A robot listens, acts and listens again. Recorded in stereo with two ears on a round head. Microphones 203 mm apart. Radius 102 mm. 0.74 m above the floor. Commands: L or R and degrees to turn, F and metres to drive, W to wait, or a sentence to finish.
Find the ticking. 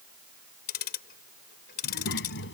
L45
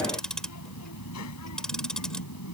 Facing the ticking.